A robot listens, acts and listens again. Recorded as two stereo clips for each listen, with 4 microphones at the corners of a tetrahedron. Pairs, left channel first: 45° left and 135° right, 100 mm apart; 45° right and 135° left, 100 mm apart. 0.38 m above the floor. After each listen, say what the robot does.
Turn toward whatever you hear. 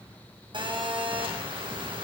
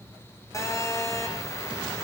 Turn 105° right.
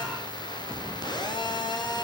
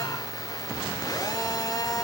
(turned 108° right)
Found it: a phone buzzing, straight ahead.